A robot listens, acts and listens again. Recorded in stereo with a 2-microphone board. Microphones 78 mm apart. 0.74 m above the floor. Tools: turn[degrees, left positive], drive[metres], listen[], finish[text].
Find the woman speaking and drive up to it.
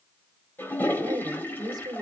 Thought: The woman speaking: about 60° right or 120° right.
Action: turn[-60]
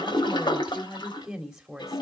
Thought: So it is at 10° right.
Action: turn[-10]
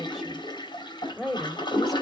Action: drive[1.0]
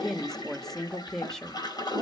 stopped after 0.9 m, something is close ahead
Action: finish[Arrived at the woman speaking, straight ahead.]